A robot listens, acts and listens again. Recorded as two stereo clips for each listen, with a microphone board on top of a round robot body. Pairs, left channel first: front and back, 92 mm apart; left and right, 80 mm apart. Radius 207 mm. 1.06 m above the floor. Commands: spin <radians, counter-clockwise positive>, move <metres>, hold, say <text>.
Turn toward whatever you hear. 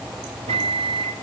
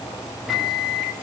spin 3.14
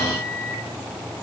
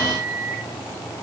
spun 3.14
say Found it: a microwave, straight ahead.